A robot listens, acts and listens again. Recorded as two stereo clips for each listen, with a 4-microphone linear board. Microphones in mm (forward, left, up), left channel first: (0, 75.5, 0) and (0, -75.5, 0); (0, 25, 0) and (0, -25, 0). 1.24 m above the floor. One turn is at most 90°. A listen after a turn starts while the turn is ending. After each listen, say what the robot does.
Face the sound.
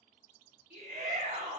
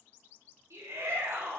Turn 90° right.
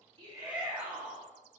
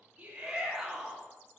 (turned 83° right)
Turn 10° right.
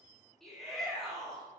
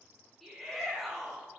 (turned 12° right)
Found it: a shout, straight ahead.